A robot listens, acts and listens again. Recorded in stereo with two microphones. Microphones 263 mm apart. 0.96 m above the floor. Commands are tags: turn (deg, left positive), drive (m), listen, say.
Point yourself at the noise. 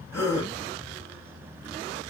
<turn deg="30"/>
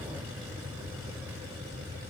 <listen/>
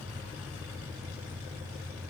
<say>I heard a gasp, but can't make it out now. It was about 20° right or 140° left.</say>